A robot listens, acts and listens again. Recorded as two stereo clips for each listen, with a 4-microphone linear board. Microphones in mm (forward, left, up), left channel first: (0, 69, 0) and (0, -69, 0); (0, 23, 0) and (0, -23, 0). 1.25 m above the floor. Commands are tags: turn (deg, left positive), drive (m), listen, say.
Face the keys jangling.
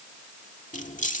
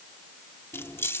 <turn deg="65"/>
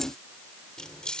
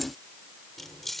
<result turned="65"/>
<say>Found it: keys jangling, straight ahead.</say>